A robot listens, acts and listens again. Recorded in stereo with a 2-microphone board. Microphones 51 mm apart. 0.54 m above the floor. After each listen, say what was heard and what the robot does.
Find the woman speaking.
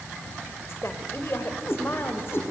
The woman speaking: about 50° left or 130° left. Turn 50° left.
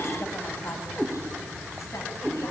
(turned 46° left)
Keep listening.
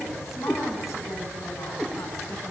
Keep listening.
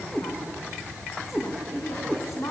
So it is at 80° left. Turn 80° left.
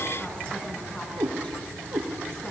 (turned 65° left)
Nothing new. It was at 15° left. Turn 15° left.
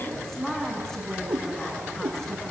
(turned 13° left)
The woman speaking is now 10° left. Turn 10° left.
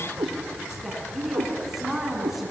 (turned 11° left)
Found it: a woman speaking, straight ahead, over 4 m away.